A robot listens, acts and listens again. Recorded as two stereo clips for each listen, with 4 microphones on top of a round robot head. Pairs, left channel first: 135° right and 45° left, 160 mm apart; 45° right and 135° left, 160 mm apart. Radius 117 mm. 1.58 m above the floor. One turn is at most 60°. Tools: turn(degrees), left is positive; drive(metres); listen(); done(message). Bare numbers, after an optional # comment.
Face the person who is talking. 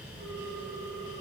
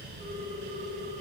listen()
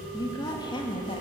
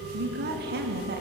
# The woman speaking: 160° left.
turn(60)
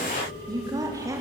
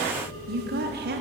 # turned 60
# The woman speaking is now 115° left.
turn(60)
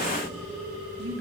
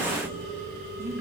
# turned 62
# Nothing new. It was at 55° left.
turn(55)
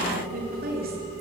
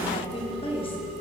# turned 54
# The woman speaking is now 15° left.
turn(15)
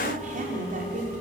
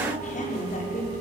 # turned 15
done("Found it: a woman speaking, straight ahead.")